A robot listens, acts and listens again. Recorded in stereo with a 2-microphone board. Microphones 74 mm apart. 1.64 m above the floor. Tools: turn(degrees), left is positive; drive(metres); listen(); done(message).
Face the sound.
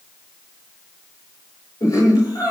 turn(degrees=55)
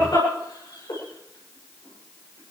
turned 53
turn(degrees=70)
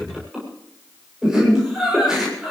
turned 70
turn(degrees=-10)
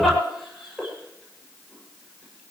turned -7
done("Facing the laughter.")